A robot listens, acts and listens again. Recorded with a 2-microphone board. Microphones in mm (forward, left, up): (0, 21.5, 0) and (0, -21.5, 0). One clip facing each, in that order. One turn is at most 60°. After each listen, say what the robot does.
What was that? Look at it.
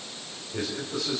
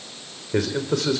Turn 60° right.
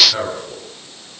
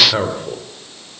Turn 25° right.
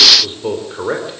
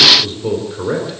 Turn 20° left.
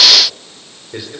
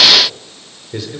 Turn 10° left.
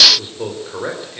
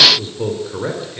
Facing the man speaking, 2 to 4 m away.